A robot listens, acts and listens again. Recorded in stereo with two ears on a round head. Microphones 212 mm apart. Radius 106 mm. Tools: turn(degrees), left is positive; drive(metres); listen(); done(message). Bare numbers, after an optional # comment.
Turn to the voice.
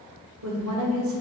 # The woman speaking: about 60° right or 120° right.
turn(-60)
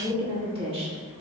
# So it is at 30° right.
turn(-30)
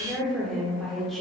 done("Found it: a woman speaking, straight ahead, 1 to 2 m away.")